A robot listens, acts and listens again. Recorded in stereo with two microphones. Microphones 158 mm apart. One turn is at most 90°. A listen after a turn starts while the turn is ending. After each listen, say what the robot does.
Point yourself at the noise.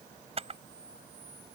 Turn 40° right.
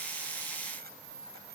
Turn 90° right.
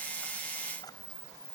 Turn 25° left.
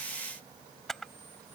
Found it: a camera shutter, straight ahead.